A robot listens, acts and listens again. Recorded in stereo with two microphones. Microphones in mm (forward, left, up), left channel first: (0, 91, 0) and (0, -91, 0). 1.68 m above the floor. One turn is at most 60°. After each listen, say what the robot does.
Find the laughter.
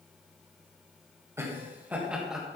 Turn 30° left.
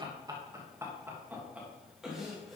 Turn 30° left.
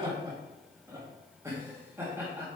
Turn 30° right.
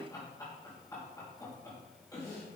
Turn 20° left.
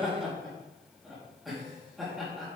Facing the laughter, 2 to 4 m away.